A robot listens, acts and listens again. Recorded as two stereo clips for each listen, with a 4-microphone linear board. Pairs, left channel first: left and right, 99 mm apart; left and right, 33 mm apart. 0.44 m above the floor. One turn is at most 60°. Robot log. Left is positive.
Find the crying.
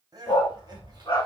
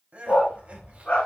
note: The crying: about 40° right or 140° right.
cmd yaw -40
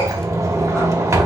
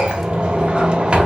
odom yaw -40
cmd idle
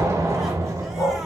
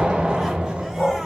cmd idle
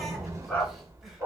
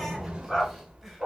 end: I heard crying, but can't make it out now. It was about straight ahead or 100° right.